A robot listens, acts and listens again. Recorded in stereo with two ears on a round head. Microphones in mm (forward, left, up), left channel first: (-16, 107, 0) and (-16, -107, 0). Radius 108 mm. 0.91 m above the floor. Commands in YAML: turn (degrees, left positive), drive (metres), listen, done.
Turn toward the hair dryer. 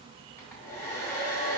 turn: 30
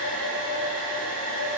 turn: 140
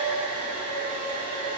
turn: 25
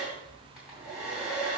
done: "Found it: a hair dryer, straight ahead, 2 to 4 m away."